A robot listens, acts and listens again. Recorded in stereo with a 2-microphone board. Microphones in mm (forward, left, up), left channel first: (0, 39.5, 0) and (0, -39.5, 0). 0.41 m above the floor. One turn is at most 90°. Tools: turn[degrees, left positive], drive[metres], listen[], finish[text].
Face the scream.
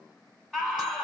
Action: turn[30]
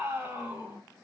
Thought: So it is at 20° right.
Action: turn[-20]
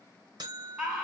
Action: finish[Found it: a scream, straight ahead, 2 to 4 m away.]